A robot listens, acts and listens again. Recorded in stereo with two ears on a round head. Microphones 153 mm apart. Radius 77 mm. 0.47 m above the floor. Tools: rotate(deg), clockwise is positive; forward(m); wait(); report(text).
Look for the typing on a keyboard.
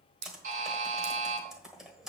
rotate(30)
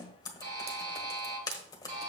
rotate(-25)
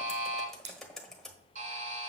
report("Found it: typing on a keyboard, straight ahead, 1 to 2 m away.")